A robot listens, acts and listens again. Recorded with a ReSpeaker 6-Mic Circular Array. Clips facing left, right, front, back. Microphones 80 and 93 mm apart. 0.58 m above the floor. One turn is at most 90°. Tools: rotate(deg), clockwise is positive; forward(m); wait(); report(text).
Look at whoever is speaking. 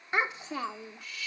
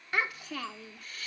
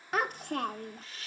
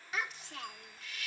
rotate(-25)
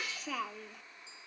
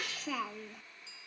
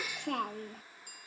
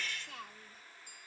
report("Found it: a child speaking, straight ahead.")